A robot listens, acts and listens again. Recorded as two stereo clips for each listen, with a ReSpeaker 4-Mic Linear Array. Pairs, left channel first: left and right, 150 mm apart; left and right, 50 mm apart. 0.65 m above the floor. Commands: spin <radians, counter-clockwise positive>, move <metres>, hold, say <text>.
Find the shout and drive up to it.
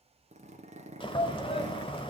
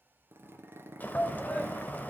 spin 0.79
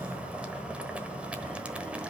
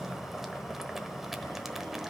hold
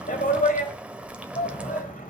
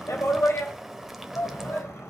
spin 1.57
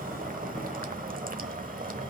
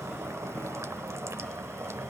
hold
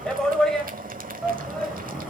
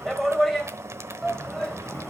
move 1.0
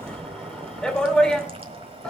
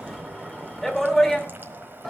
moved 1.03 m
move 1.0
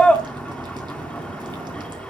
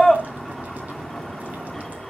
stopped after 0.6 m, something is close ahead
spin 0.17
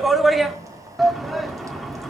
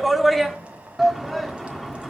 say I am next to the shout.